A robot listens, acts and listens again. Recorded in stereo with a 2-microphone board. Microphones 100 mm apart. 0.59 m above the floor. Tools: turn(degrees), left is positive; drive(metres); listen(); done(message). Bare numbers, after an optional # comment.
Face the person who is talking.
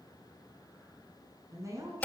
# The woman speaking: about 30° right or 150° right.
turn(-30)
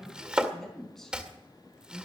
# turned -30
# So it is at 10° left.
turn(10)
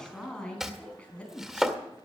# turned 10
# The woman speaking is now 15° left.
turn(15)
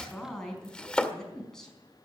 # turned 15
done("Facing the woman speaking.")